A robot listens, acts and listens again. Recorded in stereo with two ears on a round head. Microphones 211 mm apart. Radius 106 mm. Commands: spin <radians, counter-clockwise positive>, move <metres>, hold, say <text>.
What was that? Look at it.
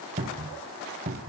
spin -0.52
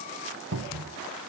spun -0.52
spin -2.01
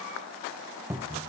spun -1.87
spin -0.17
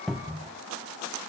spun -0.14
say Found it: a cupboard door, straight ahead.